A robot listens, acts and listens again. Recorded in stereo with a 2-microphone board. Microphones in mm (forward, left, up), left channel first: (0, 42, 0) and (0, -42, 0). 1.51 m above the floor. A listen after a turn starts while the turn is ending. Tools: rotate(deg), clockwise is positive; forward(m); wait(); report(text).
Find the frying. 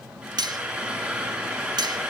rotate(20)
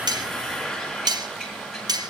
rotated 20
report("Facing the frying.")